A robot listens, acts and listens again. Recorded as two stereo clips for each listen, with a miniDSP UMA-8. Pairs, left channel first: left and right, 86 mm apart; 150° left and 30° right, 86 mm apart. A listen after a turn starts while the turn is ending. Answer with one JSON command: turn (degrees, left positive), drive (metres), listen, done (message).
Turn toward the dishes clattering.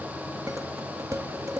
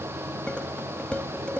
{"turn": -135}
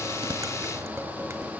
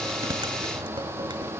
{"listen": true}
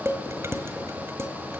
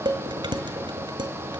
{"turn": -35}
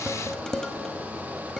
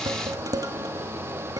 {"done": "Found it: dishes clattering, straight ahead, 1 to 2 m away."}